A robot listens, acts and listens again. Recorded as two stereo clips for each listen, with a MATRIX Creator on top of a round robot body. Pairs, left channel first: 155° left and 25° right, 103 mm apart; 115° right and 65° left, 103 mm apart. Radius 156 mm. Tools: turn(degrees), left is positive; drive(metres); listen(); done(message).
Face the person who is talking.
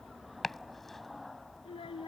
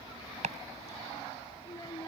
turn(degrees=-165)
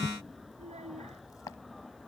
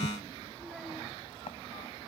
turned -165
turn(degrees=-20)
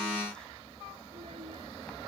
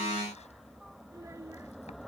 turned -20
listen()
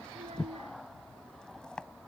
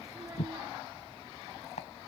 listen()
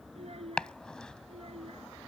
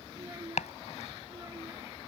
done("Found it: a child speaking, straight ahead.")